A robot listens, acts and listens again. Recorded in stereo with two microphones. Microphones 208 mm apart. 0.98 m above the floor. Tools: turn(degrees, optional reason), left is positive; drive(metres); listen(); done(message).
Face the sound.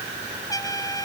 turn(degrees=15, reason="The trumpet: about 15° left or 165° left.")
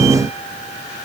listen()
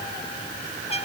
turn(degrees=150, reason="So it is at 150° left.")
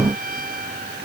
turn(degrees=-45, reason="The trumpet is now 45° right.")
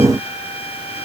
turn(degrees=30, reason="The trumpet is now 30° left.")
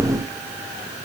listen()
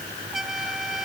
done("Found it: a trumpet, straight ahead.")